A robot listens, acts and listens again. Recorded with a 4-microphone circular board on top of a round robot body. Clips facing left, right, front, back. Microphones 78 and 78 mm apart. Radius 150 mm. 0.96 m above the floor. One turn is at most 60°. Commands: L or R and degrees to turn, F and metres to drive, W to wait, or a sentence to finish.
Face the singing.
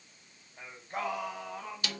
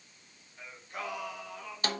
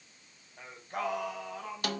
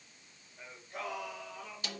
L35
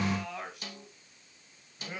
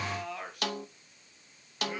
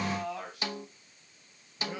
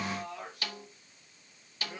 Facing the singing.